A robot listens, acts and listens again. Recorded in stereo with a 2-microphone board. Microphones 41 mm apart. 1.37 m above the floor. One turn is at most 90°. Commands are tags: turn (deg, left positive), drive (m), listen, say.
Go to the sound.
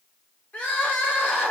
<turn deg="55"/>
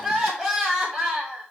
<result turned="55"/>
<drive m="1.0"/>
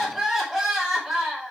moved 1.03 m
<drive m="1.0"/>
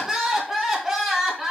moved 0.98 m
<turn deg="-10"/>
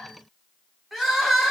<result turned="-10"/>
<drive m="1.0"/>
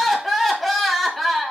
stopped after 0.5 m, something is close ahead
<say>Arrived at the crying, straight ahead.</say>